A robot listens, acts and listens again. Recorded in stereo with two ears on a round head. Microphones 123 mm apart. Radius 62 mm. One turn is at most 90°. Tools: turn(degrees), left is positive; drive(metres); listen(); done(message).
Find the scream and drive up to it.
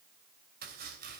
listen()
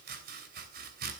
listen()
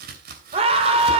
turn(degrees=-45)
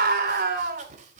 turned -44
turn(degrees=-90)
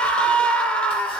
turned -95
drive(metres=1.0)
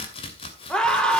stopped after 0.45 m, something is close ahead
done("Something is in my way. I am facing the scream but have not reached it.")